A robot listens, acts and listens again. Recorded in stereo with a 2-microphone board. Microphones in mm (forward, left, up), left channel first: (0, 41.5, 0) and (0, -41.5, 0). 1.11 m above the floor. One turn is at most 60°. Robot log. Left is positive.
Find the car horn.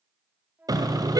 note: The car horn: about 50° right or 130° right.
cmd yaw -50
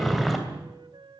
end: Found it: a car horn, straight ahead, 2 to 4 m away.